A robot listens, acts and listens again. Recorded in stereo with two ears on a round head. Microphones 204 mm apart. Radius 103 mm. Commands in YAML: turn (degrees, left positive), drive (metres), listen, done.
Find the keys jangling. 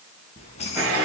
turn: 30
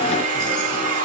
listen: true
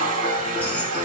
listen: true
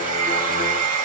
done: "I heard keys jangling, but can't make it out now. It was about straight ahead or 120° left."